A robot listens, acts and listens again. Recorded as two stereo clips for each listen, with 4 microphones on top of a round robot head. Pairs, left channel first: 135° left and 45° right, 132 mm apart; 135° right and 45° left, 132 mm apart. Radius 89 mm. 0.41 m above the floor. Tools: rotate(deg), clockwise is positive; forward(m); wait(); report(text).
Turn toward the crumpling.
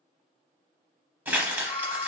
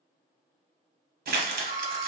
rotate(-30)
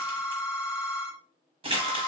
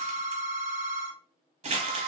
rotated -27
report("Found it: crumpling, straight ahead, under 1 m away.")